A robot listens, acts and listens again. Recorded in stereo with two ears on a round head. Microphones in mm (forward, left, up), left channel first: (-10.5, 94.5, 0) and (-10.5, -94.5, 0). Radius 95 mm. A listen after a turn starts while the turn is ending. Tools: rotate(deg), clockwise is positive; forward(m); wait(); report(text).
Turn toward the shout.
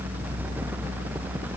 wait()
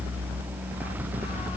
wait()
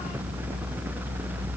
report("I can't make out a shout.")